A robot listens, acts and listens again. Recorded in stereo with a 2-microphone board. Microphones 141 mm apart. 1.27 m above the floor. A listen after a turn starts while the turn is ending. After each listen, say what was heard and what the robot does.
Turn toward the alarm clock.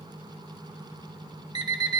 The alarm clock: about 30° right or 150° right. Turn 30° right.
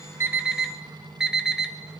Found it: an alarm clock, straight ahead.